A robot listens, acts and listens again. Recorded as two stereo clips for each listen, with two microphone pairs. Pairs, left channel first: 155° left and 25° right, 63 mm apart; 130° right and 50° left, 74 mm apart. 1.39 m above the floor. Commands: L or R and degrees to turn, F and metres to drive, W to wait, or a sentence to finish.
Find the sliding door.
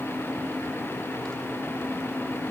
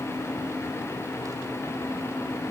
W
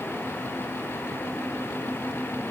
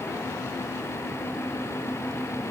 W
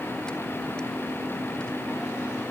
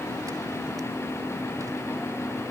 I can't make out a sliding door to turn to.